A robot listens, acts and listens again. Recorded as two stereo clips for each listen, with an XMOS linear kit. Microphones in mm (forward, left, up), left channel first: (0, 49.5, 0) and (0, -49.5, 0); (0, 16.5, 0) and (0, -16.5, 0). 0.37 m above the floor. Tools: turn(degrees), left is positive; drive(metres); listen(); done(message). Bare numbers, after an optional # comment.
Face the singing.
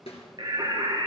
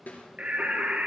# The singing: about 55° right or 125° right.
turn(-55)
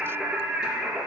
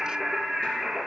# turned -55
# So it is at 15° right.
turn(-15)
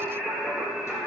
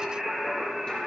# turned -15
done("Found it: singing, straight ahead.")